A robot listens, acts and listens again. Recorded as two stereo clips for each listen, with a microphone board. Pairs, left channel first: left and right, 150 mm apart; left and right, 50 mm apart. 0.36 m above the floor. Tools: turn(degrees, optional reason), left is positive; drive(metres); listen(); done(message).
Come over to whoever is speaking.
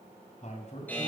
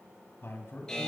turn(degrees=50, reason="The man speaking: about 50° left or 130° left.")
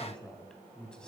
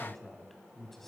drive(metres=1.0)
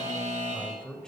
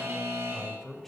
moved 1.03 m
drive(metres=1.0)
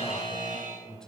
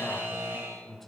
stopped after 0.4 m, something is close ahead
done("I am next to the man speaking.")